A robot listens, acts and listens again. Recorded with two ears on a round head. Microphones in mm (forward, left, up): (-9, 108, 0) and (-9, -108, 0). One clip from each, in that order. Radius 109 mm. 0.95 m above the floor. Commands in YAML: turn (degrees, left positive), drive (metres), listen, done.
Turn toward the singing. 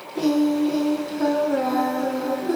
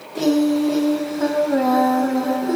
turn: -15
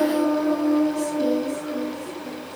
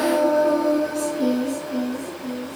turn: -25
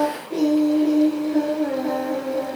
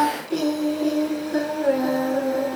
turn: -135
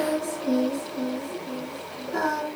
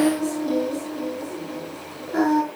done: "Facing the singing."